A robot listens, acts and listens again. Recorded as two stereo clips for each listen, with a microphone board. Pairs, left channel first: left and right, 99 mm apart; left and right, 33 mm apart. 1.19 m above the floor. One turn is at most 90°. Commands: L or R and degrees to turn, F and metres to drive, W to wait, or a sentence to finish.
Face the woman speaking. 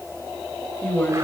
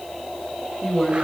L20
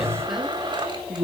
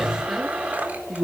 Found it: a woman speaking, straight ahead.